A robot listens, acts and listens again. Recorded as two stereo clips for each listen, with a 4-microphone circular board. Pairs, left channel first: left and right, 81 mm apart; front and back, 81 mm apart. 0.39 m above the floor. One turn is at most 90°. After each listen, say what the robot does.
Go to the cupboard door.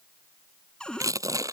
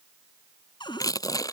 Turn 15° left.
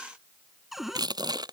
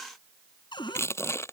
Drive 1.0 m forward.
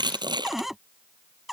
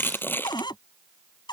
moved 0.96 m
Drive 1.0 m forward.
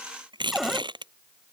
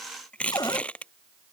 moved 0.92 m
Drive 1.0 m forward.
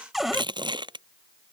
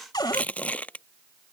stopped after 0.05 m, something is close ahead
Arrived at the cupboard door, straight ahead.